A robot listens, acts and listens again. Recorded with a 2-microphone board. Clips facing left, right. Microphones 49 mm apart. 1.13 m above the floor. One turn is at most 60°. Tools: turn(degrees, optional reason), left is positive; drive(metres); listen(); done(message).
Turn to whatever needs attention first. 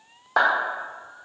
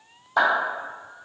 listen()
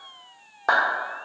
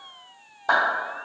listen()
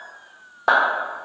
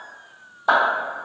done("I can't make out anything urgent to turn to.")